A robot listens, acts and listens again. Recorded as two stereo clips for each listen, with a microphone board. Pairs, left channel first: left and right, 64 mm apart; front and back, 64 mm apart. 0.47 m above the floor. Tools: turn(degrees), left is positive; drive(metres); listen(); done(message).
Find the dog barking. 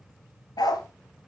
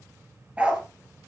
turn(degrees=105)
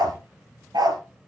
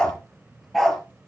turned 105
turn(degrees=-90)
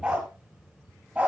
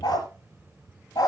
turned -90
turn(degrees=-20)
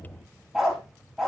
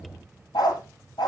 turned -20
done("Found it: a dog barking, straight ahead, 2 to 4 m away.")